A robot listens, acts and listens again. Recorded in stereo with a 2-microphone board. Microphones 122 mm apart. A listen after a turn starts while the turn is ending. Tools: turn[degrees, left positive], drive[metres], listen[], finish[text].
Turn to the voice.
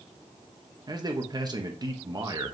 Thought: The man speaking: about 35° right or 145° right.
Action: turn[-35]
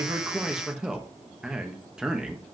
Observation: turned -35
Thought: So it is at 10° right.
Action: turn[-10]
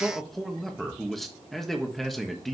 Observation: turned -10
Action: finish[Found it: a man speaking, straight ahead, 1 to 2 m away.]